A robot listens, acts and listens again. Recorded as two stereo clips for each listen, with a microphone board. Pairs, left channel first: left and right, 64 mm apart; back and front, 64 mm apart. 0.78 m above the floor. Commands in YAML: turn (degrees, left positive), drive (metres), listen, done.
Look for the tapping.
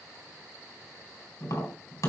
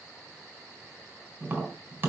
turn: 60
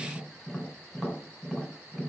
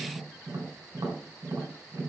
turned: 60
done: "Facing the tapping."